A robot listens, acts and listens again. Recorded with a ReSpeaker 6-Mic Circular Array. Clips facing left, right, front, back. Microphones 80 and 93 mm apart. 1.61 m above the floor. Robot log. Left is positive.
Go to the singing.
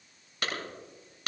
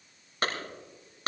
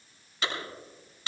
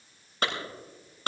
cmd idle
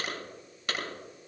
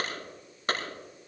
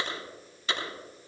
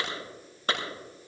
cmd idle
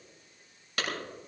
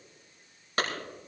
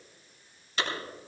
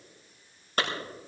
end: I can't make out singing to turn to.